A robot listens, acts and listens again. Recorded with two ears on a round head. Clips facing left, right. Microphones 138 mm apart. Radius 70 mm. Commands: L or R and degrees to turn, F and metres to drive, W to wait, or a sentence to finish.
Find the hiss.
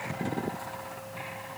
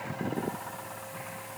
W
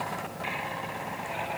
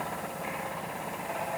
W
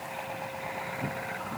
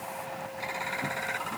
I can't make out a hiss to turn to.